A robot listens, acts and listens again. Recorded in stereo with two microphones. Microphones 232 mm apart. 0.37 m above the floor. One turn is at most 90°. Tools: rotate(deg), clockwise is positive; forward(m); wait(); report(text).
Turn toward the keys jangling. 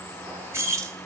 rotate(30)
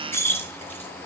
rotate(-10)
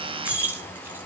rotate(10)
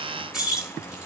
report("Found it: keys jangling, straight ahead.")